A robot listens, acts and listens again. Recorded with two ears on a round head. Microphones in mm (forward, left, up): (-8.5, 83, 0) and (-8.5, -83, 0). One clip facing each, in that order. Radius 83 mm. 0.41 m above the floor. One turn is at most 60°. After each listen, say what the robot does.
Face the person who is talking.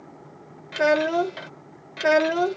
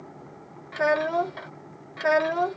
Turn 35° left.
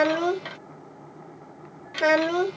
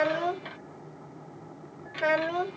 Turn 60° left.
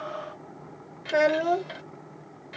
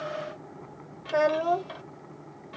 Turn 25° left.
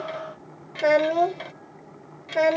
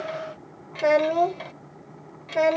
Facing the child speaking.